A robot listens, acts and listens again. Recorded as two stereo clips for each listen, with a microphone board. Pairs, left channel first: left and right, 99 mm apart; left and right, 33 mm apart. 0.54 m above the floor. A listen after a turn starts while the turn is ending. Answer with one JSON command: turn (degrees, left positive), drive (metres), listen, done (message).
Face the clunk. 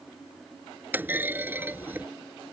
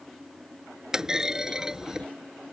{"turn": -20}
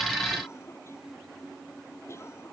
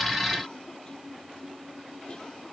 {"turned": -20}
{"listen": true}
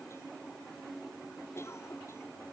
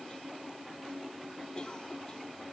{"done": "I heard a clunk, but can't make it out now. It was about straight ahead or 140° right."}